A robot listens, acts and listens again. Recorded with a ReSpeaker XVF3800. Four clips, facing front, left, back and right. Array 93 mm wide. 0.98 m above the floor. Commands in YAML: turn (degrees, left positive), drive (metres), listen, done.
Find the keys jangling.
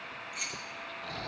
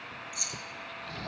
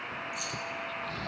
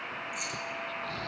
turn: -30
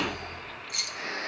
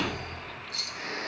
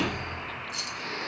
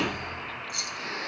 done: "Found it: keys jangling, straight ahead, under 1 m away."